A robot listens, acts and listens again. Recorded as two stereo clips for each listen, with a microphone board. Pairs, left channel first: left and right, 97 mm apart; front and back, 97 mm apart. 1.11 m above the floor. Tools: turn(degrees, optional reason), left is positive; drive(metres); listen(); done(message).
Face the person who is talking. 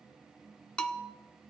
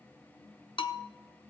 listen()
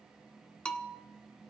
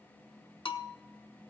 listen()
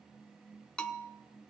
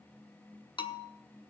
done("I can't make out anyone speaking, only a bell.")